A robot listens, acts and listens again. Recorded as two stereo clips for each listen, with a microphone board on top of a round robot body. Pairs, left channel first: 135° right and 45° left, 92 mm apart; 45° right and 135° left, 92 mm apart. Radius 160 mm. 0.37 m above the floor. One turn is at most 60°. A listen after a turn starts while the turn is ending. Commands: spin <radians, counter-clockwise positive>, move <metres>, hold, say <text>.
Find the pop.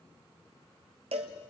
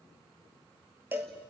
hold
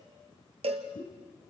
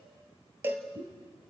spin 1.05
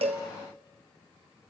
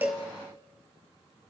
spin 1.05
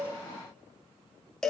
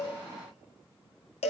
spin 1.05
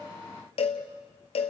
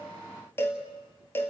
say Facing where the pop came from. I can't hear it now.